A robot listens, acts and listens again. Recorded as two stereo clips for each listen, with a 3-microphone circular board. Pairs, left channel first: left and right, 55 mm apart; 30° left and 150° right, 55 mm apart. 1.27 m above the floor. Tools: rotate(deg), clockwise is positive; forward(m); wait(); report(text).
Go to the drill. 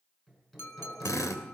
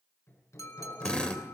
rotate(-100)
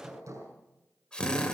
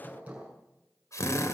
rotate(-15)
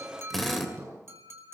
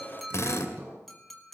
forward(1.0)
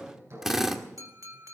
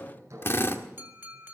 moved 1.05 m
rotate(10)
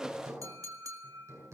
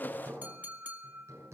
wait()
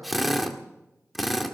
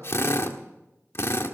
forward(1.0)
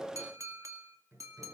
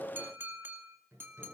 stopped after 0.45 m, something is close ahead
wait()
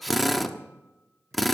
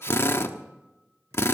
report("I am next to the drill.")